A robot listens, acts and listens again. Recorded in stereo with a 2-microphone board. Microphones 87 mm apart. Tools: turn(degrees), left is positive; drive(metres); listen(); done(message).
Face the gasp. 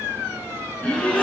turn(degrees=15)
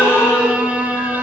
turn(degrees=150)
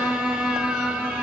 done("I heard a gasp from this way, but can't make it out now.")